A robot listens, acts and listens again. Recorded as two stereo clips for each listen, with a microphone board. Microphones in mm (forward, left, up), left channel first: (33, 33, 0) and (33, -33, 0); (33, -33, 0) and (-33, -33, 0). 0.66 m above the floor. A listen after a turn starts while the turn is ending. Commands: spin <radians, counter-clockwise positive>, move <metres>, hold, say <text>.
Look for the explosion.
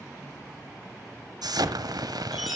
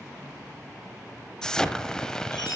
spin -1.40
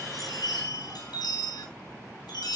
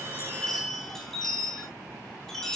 say I heard an explosion from this way, but can't make it out now.